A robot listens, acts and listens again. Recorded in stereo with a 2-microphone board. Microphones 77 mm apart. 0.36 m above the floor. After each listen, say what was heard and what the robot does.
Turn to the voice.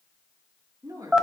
The woman speaking: about 50° right or 130° right. Turn 50° right.
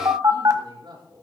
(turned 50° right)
So it is at 80° right. Turn 80° right.
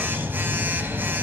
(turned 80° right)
Keep listening.
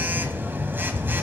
Keep listening.
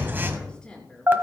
The woman speaking is now 10° left. Turn 10° left.
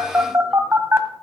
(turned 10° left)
Keep listening.
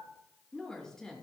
Found it: a woman speaking, straight ahead.